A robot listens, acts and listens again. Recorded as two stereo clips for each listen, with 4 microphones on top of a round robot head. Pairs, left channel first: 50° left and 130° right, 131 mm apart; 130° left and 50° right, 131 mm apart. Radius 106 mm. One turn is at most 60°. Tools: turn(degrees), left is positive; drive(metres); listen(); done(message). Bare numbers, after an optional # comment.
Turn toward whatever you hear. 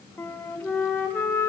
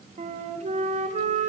# The flute: 30° right.
turn(-30)
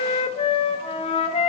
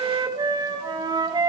done("Facing the flute.")